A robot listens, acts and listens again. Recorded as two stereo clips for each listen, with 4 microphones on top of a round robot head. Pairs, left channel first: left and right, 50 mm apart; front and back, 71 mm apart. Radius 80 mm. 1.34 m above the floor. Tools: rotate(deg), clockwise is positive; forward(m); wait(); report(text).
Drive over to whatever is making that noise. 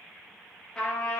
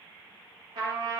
rotate(-165)
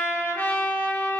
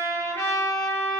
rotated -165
rotate(-55)
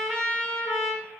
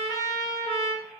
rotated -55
forward(1.0)
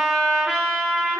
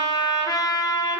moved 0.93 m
forward(1.0)
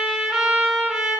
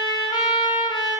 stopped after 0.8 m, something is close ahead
rotate(10)
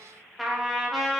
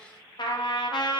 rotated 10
report("Arrived at the trumpet, straight ahead.")